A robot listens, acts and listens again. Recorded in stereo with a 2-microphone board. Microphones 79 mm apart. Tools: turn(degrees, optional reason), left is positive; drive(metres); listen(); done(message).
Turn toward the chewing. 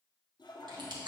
turn(degrees=-75, reason="The chewing: about 75° right or 105° right.")
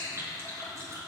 turn(degrees=-30, reason="So it is at 30° right.")
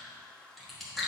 done("Facing the chewing, 1 to 2 m away.")